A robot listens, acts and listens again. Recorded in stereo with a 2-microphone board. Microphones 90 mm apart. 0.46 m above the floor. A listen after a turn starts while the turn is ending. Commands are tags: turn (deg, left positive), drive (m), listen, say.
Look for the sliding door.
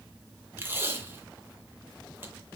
<listen/>
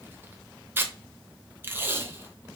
<listen/>
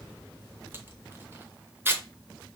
<say>I can't make out a sliding door to turn to.</say>